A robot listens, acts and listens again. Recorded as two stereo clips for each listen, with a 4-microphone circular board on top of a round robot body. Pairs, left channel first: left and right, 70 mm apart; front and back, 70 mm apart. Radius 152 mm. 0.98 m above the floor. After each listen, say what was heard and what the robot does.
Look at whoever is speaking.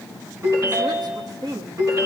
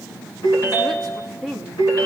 The woman speaking: 85° right. Turn 85° right.
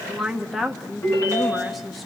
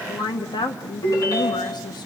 Facing the woman speaking, 1 to 2 m away.